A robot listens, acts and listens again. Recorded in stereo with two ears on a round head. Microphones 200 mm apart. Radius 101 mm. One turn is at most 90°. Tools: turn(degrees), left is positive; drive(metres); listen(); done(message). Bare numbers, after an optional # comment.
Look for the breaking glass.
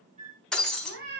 turn(30)
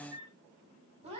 listen()
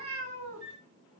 done("I heard breaking glass, but can't make it out now. It was about 25° right or 145° left.")